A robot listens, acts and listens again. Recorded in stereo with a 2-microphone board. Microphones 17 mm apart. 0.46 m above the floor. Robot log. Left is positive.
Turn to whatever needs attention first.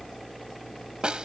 cmd idle
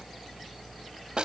cmd idle
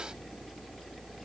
end: I can't make out anything urgent to turn to.